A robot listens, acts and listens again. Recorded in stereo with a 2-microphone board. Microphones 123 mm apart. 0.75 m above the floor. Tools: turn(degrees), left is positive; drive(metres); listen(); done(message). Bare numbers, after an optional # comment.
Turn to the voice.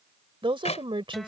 # The woman speaking: about 45° right or 135° right.
turn(-45)
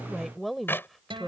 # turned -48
done("Found it: a woman speaking, straight ahead.")